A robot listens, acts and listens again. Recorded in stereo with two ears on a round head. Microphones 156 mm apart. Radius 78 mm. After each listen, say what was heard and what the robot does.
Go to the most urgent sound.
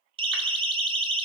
The siren: about 30° right or 150° right. Turn 30° right.
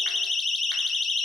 Drive 1.0 m forward.
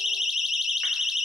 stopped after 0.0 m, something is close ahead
Blocked. The siren is further on, straight ahead.